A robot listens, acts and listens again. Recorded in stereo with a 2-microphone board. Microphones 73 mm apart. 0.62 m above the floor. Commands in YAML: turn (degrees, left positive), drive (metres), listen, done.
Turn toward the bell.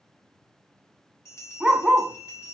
turn: 45
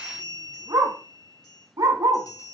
turn: 85
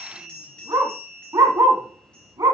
turn: 15
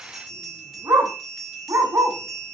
done: "Facing the bell, 2 to 4 m away."